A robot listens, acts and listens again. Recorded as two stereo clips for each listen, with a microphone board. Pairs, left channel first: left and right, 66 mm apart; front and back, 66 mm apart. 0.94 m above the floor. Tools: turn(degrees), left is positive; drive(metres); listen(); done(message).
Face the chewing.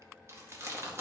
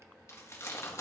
turn(degrees=-45)
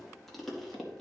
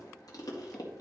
done("Facing the chewing.")